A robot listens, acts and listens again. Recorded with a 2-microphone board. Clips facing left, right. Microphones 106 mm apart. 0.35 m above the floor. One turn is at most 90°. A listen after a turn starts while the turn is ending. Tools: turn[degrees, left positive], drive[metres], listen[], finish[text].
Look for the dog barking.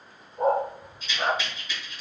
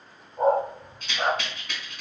Thought: The dog barking: about 20° right or 160° right.
Action: turn[-20]
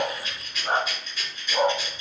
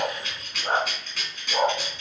Thought: The dog barking: about 20° right or 160° right.
Action: turn[-20]
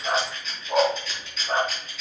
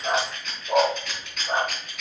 Thought: The dog barking: about 25° right or 155° right.
Action: turn[-25]
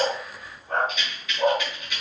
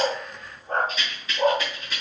Thought: The dog barking: about 35° right or 145° right.
Action: turn[-35]
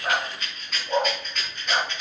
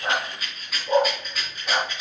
Thought: So it is at 115° right.
Action: turn[-90]
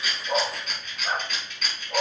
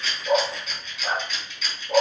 Thought: The dog barking is now 55° right.
Action: turn[-55]
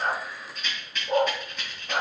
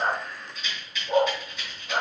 Thought: The dog barking is now 20° left.
Action: turn[20]
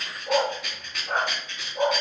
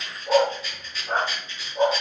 Action: finish[Facing the dog barking, 1 to 2 m away.]